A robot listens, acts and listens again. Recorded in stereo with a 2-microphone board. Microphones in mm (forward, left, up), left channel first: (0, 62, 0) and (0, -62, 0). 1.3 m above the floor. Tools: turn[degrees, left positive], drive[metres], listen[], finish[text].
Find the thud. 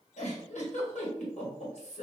Action: listen[]
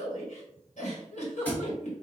Action: turn[30]
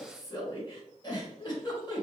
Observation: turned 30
Action: listen[]
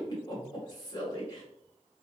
Action: finish[I heard a thud, but can't make it out now. It was about 15° right or 135° left.]